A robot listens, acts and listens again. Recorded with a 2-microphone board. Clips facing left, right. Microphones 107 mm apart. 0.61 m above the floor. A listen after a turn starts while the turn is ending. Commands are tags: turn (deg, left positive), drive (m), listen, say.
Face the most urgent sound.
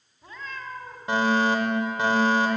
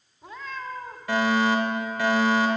<turn deg="25"/>
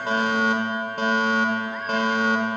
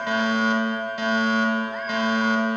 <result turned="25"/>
<turn deg="130"/>
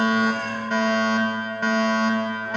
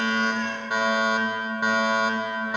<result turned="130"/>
<turn deg="-15"/>
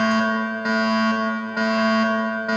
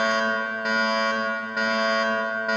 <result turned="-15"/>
<say>Found it: a fire alarm, straight ahead, 2 to 4 m away.</say>